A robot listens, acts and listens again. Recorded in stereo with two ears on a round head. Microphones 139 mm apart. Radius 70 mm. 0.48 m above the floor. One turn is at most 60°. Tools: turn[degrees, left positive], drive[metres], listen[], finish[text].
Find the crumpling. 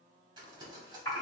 Thought: The crumpling: about 30° right or 150° right.
Action: turn[-30]
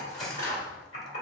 Action: listen[]
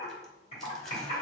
Action: listen[]
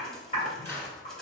Action: finish[I heard crumpling, but can't make it out now. It was about straight ahead or 120° right.]